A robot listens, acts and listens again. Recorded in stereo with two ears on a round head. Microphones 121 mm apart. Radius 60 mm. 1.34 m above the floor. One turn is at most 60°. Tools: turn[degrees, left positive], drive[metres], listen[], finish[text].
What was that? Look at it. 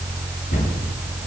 Thought: The cupboard door: about 70° left or 110° left.
Action: turn[60]
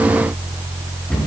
Thought: So it is at 10° left.
Action: turn[10]
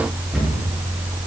Action: finish[Facing the cupboard door, over 4 m away.]